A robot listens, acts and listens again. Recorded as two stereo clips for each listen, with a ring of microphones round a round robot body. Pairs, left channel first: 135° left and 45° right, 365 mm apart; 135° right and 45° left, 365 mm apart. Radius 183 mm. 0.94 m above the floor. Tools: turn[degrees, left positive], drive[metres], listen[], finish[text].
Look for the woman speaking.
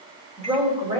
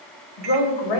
Thought: The woman speaking: 120° right.
Action: turn[-120]
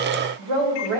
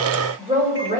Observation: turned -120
Thought: The woman speaking is now 25° right.
Action: turn[-25]
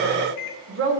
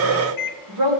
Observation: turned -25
Thought: The woman speaking is now 15° left.
Action: turn[15]
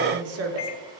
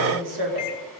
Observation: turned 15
Action: finish[Found it: a woman speaking, straight ahead.]